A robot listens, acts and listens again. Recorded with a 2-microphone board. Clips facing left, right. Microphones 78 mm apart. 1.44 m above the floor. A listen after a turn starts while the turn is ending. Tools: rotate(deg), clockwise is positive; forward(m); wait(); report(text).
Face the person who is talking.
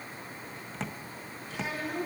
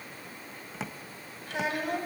rotate(70)
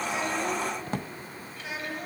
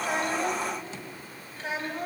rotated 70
rotate(35)
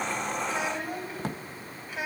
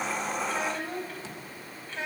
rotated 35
rotate(-10)
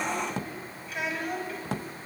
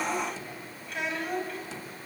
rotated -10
report("Found it: a child speaking, straight ahead.")